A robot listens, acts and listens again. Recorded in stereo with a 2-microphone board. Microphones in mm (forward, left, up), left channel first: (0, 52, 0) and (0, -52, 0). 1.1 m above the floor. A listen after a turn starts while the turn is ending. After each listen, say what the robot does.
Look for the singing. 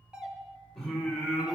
Turn 30° right.
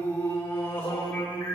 Turn 15° left.
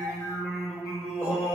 Facing the singing, 2 to 4 m away.